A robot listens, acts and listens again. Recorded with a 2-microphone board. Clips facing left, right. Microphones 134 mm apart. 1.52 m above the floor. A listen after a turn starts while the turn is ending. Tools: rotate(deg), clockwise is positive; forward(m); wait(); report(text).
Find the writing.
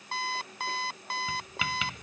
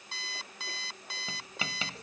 rotate(35)
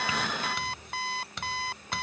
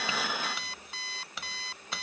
report("Facing the writing.")